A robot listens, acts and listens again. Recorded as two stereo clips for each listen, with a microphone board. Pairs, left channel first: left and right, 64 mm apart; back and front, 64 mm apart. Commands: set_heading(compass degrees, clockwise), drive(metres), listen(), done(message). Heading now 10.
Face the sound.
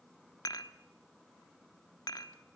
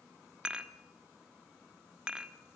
set_heading(295)
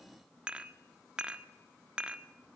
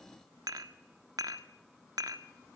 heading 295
set_heading(310)
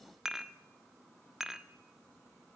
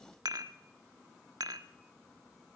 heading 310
set_heading(320)
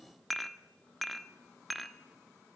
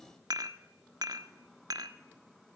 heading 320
done("Found it: dishes clattering, straight ahead.")